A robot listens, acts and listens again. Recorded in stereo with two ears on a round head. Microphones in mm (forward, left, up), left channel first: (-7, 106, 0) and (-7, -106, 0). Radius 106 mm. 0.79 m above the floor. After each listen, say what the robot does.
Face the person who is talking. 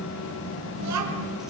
Turn 90° right.
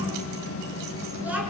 Found it: a child speaking, straight ahead.